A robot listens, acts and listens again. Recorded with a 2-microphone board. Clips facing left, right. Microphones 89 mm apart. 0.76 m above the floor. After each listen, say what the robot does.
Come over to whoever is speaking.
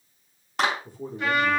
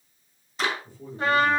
Turn 65° left.
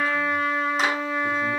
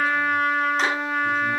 Keep listening.
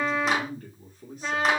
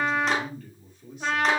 Turn 45° left.
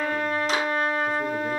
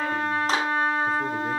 Keep listening.
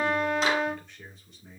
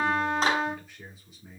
Drive 1.0 m forward.
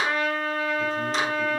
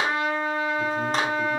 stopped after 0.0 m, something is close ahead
Keep listening.
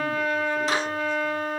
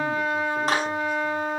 Keep listening.
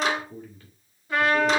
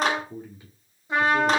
Turn 15° right.
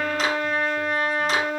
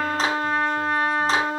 Keep listening.
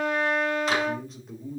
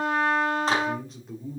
Blocked. The man speaking is further on, straight ahead.